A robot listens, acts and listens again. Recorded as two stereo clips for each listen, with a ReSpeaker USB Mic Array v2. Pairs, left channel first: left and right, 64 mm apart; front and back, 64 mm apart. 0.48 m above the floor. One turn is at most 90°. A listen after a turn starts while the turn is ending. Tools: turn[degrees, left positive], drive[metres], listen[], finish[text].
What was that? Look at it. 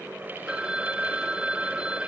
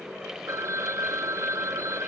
Thought: The phone ringing: 160° right.
Action: turn[-90]
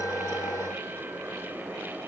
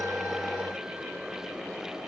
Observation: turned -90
Thought: Nothing new. It was at 70° right.
Action: turn[-70]
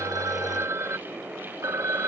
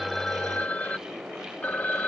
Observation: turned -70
Thought: The phone ringing is now 60° right.
Action: turn[-60]
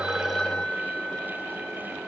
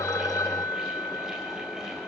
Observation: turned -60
Thought: The phone ringing is now 10° left.
Action: turn[10]
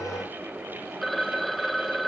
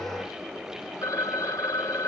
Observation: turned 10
Action: finish[Facing the phone ringing.]